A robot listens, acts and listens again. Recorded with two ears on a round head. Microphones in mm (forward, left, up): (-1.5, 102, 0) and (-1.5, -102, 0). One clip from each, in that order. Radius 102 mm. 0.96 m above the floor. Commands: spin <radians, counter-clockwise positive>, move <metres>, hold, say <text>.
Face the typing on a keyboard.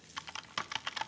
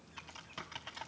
spin 0.96
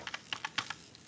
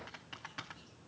spin 1.22
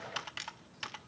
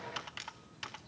spin 0.17
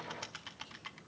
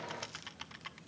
say Facing the typing on a keyboard, under 1 m away.